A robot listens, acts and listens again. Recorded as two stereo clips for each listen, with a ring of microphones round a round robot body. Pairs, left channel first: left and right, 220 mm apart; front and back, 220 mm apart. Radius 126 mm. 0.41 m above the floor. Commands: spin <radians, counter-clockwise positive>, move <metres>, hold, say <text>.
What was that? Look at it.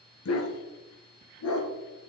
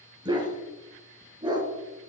spin 1.92
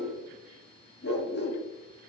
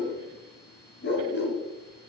spin 0.70
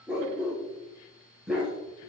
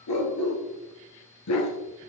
say Found it: a dog barking, straight ahead.